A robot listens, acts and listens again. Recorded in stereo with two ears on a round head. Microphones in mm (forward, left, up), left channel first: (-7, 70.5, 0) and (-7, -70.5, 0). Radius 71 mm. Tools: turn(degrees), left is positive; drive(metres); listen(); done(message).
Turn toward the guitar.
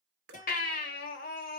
turn(degrees=50)
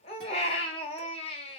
listen()
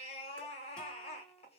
turn(degrees=10)
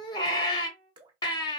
done("Facing the guitar, 1 to 2 m away.")